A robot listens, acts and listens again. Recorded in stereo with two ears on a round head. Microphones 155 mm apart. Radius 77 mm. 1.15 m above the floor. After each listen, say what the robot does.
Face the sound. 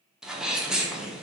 Turn 30° right.
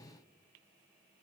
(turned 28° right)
Keep listening.
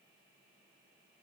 I heard a sneeze, but can't make it out now. It was about 25° left or 150° right.